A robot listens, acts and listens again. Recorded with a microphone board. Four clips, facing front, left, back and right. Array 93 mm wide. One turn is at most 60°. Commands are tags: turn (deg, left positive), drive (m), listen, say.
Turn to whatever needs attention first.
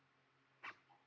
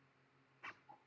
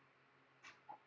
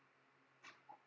<listen/>
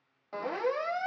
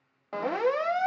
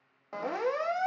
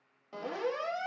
<turn deg="60"/>
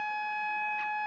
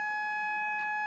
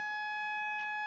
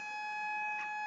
<turn deg="35"/>
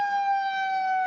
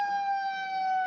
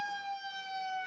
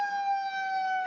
<say>Found it: a siren, straight ahead.</say>